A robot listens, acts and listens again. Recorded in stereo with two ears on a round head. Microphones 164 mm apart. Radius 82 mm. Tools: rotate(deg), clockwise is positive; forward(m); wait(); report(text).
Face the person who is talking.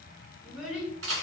rotate(30)
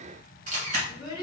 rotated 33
rotate(-25)
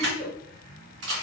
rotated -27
report("Facing the child speaking.")